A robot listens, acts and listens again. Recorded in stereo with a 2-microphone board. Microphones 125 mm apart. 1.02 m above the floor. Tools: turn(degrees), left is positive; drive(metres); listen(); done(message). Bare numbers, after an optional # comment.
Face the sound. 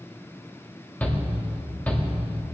turn(30)
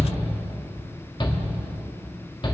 # So it is at 135° left.
turn(135)
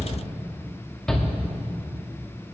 done("Facing the shout, 2 to 4 m away.")